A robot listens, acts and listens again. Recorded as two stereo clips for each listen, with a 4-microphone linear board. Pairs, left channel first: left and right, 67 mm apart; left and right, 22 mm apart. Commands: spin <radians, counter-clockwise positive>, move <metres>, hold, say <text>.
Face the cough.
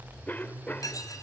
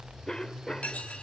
spin 0.44
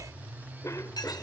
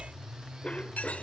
spin 2.27
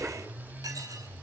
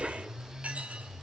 spin -0.44
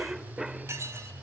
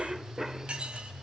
say Facing the cough.